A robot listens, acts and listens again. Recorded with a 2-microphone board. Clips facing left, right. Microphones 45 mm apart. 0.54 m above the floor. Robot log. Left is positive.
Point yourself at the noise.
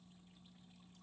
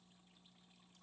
cmd idle
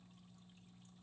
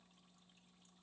cmd idle
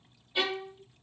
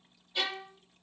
cmd yaw +30
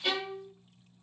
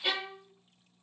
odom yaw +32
note: So it is at 15° right.
cmd yaw -15
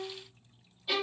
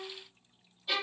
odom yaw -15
end: Found it: a violin, straight ahead.